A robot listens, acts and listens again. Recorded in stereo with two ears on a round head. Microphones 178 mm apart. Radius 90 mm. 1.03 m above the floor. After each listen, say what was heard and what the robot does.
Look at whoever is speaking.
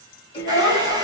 The child speaking: about 60° left or 120° left. Turn 60° left.
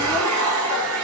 Keep listening.
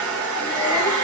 Keep listening.
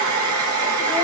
I heard a child speaking, but can't make it out now. It was about straight ahead or 60° left.